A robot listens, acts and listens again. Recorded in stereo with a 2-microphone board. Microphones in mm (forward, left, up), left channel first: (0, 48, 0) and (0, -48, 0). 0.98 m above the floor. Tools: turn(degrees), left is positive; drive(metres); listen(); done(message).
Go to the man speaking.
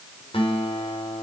listen()
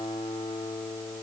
listen()
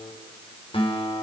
done("I can't make out a man speaking, only a guitar.")